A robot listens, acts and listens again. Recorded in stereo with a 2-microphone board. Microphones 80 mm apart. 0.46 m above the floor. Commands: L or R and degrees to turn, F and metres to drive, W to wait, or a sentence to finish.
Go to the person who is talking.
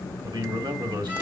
R65
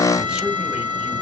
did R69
W
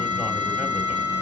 W
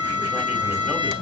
I heard a man speaking, but can't make it out now. It was about straight ahead or 45° right. I did not reach it.